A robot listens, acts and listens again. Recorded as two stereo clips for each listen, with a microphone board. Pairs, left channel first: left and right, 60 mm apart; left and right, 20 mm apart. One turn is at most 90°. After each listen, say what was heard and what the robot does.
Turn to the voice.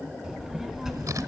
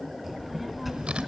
Turn 30° left.
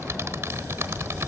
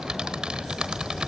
So it is at 30° right. Turn 30° right.
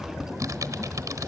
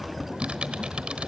Facing the child speaking.